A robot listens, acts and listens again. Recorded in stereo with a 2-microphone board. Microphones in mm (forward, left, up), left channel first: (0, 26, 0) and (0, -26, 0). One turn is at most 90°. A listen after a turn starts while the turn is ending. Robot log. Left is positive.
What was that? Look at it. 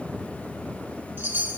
note: The chime: about 45° right or 135° right.
cmd yaw -45
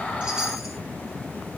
cmd idle
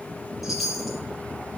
end: Facing the chime.